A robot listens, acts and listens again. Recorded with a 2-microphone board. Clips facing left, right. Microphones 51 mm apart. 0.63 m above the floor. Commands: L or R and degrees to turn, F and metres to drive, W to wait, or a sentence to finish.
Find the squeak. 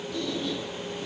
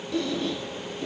R65
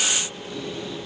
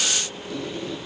R50
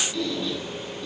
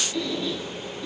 Found it: a squeak, straight ahead.